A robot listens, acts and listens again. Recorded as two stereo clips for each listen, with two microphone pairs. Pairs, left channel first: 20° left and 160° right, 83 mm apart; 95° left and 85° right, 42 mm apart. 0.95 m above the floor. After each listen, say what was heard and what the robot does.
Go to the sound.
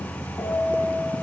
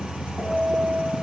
The piano: 20° right. Turn 20° right.
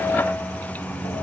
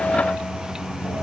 Keep listening.
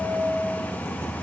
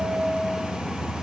The piano is now 10° right. Turn 10° right.
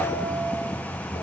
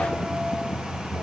Keep listening.
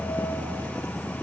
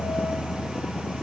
Keep listening.
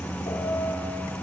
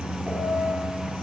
Facing where the piano came from. I can't hear it now. I did not reach it.